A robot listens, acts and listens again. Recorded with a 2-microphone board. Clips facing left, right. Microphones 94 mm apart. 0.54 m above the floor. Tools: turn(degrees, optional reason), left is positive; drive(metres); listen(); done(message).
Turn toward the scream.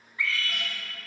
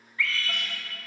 turn(degrees=20, reason="The scream: about 20° left or 160° left.")
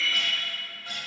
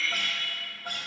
done("Found it: a scream, straight ahead, 1 to 2 m away.")